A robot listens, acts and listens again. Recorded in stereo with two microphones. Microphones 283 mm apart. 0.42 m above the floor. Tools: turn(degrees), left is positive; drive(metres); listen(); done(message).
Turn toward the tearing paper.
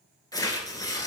turn(degrees=30)
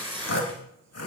turn(degrees=-15)
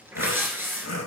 turn(degrees=-10)
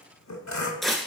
done("Facing the tearing paper.")